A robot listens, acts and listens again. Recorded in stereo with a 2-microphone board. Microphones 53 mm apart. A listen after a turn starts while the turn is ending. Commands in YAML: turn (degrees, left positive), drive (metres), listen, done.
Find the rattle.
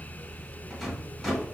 turn: -30
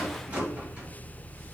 turn: -145
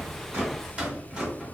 turn: -15
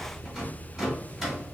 done: "Facing the rattle."